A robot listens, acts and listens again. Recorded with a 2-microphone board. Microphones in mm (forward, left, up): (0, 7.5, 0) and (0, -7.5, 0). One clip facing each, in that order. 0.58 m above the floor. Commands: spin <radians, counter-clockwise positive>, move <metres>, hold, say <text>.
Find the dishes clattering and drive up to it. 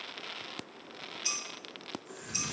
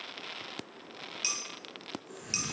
spin -0.96
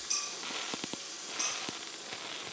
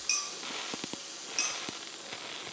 spin -1.22
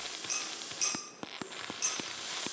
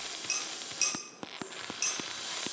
spin -0.44
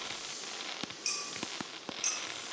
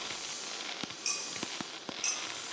move 1.0
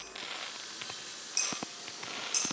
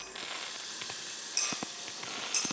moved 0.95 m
move 1.0
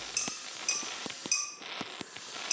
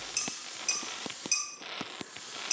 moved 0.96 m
move 1.0
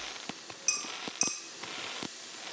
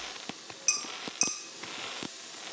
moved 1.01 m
spin -0.26
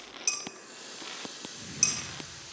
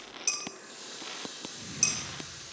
move 1.0
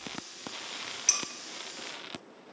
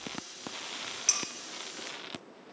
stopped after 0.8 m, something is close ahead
say Arrived at the dishes clattering, straight ahead.